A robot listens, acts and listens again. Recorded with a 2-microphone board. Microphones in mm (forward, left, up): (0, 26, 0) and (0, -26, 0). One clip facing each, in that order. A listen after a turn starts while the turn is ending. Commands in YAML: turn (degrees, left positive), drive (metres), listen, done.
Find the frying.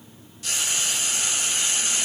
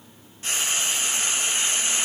turn: -35
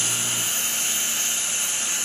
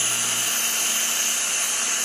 turn: -110
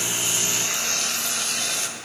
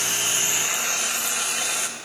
turn: -15
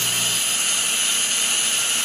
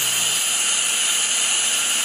done: "Facing the frying."